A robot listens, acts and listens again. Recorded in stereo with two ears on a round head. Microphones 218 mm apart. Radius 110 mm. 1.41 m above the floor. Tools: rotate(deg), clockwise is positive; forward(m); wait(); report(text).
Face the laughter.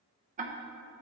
wait()
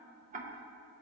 wait()
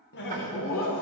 rotate(-60)
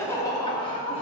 rotate(-25)
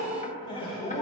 rotate(-25)
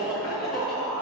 report("Found it: laughter, straight ahead, 2 to 4 m away.")